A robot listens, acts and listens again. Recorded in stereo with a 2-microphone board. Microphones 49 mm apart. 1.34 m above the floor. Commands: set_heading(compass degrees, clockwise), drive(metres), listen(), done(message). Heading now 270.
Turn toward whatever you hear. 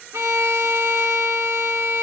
set_heading(340)
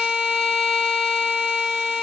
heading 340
set_heading(355)
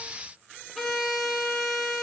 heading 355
done("Facing the violin.")